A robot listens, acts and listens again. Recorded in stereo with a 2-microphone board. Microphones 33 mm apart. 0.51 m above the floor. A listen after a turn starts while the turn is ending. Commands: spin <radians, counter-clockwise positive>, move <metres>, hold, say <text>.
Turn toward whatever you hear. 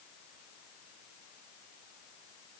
hold
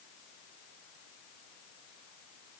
hold
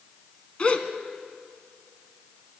spin 0.52
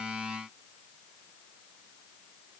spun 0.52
hold
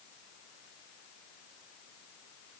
say I heard a gasp, but can't make it out now. It was about straight ahead or 120° left.